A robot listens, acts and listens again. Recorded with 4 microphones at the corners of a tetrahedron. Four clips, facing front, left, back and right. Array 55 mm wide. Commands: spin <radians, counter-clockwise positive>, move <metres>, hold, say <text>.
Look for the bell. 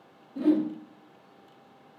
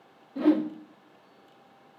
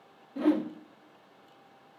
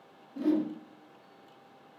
hold
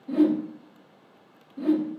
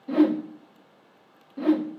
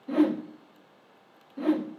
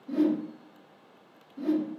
hold
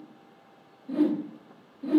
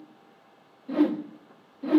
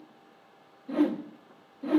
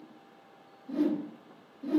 say I can't make out a bell to turn to.